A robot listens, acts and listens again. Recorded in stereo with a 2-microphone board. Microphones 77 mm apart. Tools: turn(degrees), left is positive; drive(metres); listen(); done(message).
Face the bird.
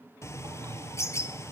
turn(degrees=40)
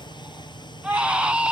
turn(degrees=105)
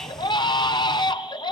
done("Facing the bird, 1 to 2 m away.")